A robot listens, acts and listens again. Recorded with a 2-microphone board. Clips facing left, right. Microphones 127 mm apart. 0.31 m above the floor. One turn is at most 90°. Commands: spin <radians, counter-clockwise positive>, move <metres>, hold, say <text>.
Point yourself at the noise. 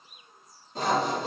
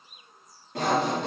spin -1.22
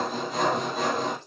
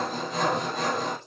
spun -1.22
say Facing the sawing.